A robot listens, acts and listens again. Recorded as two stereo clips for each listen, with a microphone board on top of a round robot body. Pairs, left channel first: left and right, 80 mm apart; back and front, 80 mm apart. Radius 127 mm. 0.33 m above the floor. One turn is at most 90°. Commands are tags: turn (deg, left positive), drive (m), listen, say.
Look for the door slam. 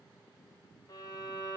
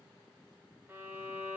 <listen/>
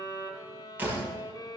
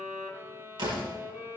<turn deg="-25"/>
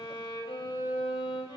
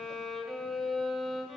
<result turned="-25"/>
<say>I heard a door slam from this way, but can't make it out now.</say>